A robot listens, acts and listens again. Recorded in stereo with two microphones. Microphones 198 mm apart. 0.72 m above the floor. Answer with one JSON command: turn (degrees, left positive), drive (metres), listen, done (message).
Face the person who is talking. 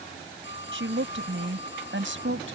{"turn": -90}
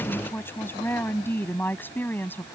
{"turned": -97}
{"turn": 10}
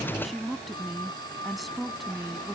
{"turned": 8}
{"done": "Found it: a woman speaking, straight ahead."}